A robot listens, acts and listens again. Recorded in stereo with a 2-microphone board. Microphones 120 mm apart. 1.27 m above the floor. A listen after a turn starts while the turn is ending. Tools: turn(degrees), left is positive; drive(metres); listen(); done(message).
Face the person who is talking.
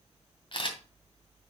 listen()
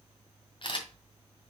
listen()
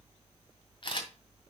done("I can't make out anyone speaking, only a camera shutter.")